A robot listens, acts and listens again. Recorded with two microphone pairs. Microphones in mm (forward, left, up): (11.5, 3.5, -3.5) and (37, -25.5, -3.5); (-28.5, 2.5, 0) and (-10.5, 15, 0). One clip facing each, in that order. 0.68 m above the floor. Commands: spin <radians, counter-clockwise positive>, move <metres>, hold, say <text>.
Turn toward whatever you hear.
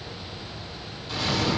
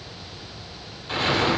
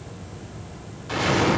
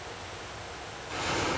spin -1.83
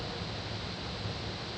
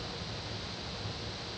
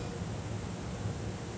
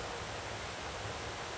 say Facing where the explosion came from. I can't hear it now.